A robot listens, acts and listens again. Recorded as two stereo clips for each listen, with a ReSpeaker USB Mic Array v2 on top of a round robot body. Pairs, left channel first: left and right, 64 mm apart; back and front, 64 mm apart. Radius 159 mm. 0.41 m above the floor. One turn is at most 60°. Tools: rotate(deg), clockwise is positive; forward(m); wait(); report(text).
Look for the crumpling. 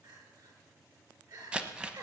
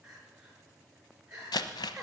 rotate(60)
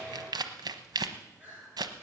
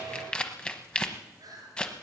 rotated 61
rotate(60)
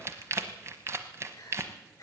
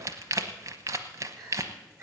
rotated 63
rotate(45)
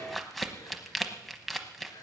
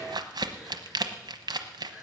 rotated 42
report("Facing the crumpling.")